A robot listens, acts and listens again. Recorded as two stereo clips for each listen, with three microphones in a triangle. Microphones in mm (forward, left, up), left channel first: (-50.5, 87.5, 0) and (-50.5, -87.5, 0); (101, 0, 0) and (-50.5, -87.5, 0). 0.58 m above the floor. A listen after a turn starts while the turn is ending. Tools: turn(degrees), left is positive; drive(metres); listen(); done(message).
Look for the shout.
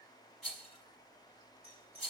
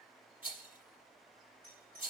listen()
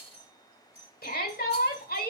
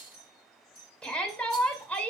turn(degrees=115)
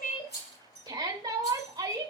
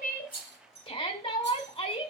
turn(degrees=-25)
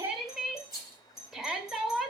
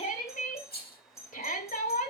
done("Facing the shout, 1 to 2 m away.")